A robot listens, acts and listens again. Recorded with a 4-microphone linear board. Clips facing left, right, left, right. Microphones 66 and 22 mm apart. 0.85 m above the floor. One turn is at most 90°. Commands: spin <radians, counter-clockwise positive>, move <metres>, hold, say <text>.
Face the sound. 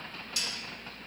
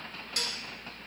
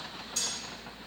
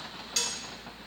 spin -0.87
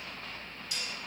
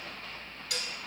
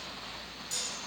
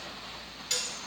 spin -1.40
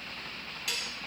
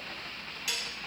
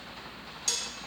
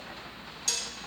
say Found it: dishes clattering, straight ahead, 1 to 2 m away.